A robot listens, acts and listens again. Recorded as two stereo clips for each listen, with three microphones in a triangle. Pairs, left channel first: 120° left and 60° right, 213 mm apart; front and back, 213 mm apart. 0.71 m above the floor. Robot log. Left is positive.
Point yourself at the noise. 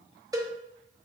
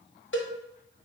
note: The cowbell: 15° left.
cmd yaw +15
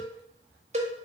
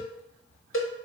end: Facing the cowbell, under 1 m away.